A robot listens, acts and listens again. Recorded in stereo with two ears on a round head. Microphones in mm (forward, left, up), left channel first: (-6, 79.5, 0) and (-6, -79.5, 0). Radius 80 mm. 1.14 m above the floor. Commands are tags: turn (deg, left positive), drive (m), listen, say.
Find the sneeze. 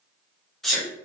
<turn deg="30"/>
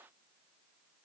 <listen/>
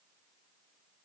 <say>I heard a sneeze, but can't make it out now. It was about 30° right or 150° left.</say>